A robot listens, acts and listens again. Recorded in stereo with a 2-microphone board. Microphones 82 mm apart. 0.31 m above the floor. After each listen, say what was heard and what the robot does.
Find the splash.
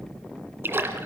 The splash: about 25° right or 155° right. Turn 25° right.
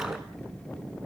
Keep listening.
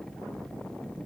I heard a splash, but can't make it out now. It was about straight ahead or 130° right.